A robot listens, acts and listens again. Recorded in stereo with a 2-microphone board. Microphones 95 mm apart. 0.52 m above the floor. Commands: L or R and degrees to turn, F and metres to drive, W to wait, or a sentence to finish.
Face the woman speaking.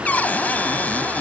W
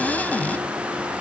W
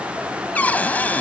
I can't make out a woman speaking to turn to.